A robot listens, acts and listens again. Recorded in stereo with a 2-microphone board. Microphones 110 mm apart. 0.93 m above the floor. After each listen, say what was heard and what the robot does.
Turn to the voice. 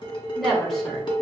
Turn 30° left.
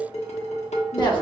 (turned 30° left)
So it is at 145° left. Turn 145° left.
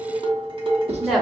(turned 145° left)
Facing the woman speaking.